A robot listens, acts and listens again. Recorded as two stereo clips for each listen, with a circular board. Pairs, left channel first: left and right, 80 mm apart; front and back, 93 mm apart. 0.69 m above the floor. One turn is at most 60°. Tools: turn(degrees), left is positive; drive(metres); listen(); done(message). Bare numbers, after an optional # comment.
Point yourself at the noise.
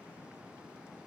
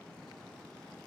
listen()
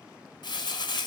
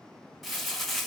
# The crumpling: 90° left.
turn(60)
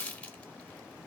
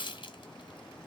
# The crumpling is now 15° left.
turn(15)
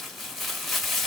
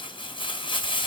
done("Found it: crumpling, straight ahead, under 1 m away.")